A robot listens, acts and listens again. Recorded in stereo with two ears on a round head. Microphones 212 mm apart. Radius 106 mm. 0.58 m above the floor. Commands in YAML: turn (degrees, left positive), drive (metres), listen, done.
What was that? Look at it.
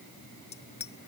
turn: 30
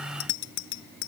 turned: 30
turn: 120
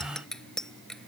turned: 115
done: "Found it: a bicycle bell, straight ahead."